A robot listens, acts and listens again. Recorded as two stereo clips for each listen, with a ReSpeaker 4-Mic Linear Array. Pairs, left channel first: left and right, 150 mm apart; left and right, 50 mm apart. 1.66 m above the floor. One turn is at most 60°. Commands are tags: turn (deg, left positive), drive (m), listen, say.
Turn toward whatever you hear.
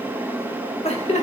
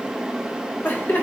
<turn deg="50"/>
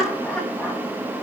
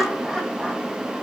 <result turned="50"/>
<turn deg="10"/>
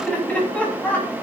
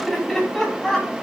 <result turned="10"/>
<turn deg="10"/>
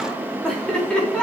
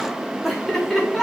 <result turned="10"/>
<say>Facing the laughter.</say>